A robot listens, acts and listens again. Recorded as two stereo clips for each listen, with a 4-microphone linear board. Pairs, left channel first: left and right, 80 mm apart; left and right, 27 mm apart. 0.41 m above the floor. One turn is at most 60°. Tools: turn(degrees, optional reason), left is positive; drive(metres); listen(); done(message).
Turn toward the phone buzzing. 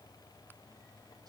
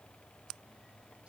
listen()
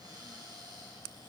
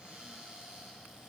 listen()
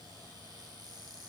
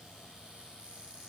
done("I can't make out a phone buzzing, only a cupboard door.")